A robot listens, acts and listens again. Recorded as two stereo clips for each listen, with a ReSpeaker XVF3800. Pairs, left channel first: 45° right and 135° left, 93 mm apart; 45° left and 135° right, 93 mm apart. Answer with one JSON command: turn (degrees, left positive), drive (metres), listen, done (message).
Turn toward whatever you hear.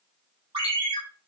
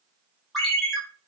{"turn": 135}
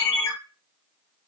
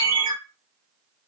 {"done": "Found it: a ringtone, straight ahead."}